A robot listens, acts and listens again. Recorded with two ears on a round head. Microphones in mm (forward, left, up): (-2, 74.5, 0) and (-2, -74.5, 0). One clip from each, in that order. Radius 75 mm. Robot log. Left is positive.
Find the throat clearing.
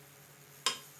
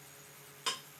cmd idle
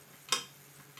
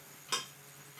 cmd idle
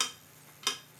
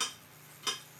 end: I can't make out throat clearing to turn to.